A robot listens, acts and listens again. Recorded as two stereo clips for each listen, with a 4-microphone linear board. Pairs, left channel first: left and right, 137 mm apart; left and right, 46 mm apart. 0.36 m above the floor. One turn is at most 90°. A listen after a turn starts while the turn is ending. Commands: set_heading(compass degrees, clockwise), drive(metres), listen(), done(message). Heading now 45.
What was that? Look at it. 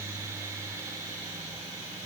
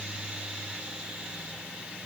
listen()
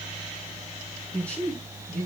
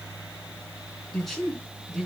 set_heading(15)
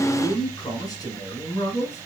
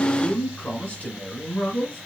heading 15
set_heading(285)
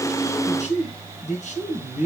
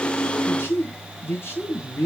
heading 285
set_heading(220)
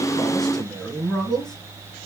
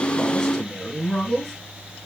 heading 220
done("Facing the man speaking.")